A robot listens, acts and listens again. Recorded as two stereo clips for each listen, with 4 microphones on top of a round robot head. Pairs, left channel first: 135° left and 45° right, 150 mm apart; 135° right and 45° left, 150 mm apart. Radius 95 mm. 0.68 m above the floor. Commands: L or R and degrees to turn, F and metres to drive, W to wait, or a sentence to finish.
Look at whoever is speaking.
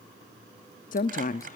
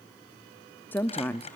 L150
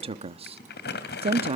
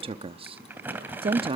Facing the woman speaking, under 1 m away.